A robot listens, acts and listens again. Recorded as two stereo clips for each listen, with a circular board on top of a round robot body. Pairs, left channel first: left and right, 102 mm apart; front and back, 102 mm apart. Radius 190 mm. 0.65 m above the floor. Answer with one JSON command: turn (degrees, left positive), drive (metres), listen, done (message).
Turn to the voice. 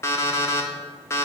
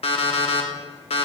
{"listen": true}
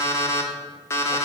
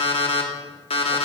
{"listen": true}
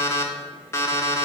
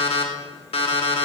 {"done": "I can't make out anyone speaking to turn to."}